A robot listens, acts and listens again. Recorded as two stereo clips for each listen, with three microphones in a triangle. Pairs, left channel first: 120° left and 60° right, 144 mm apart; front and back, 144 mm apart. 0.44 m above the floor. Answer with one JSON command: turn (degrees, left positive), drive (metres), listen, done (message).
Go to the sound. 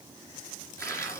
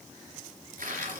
{"turn": -170}
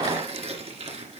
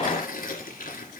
{"turn": -15}
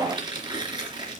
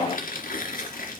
{"drive": 1.0}
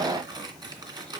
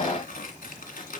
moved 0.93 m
{"drive": 1.0}
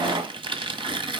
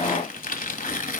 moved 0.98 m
{"drive": 1.0}
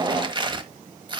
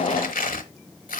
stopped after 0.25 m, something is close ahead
{"done": "I am next to the tearing paper."}